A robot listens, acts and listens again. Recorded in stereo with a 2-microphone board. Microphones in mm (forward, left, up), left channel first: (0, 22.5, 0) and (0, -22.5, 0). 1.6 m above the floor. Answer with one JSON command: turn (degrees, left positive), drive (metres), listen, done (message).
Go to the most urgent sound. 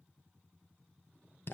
{"listen": true}
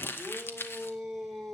{"turn": -30}
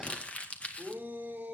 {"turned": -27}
{"turn": -145}
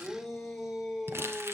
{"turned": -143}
{"drive": 1.0}
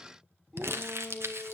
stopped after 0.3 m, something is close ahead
{"done": "Blocked. The shout is further on, straight ahead."}